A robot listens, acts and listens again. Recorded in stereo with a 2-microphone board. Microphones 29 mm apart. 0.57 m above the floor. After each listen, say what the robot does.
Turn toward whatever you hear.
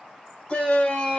Turn 40° left.
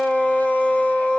Turn 95° left.
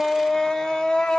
Turn 15° left.
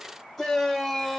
Found it: a shout, straight ahead, 1 to 2 m away.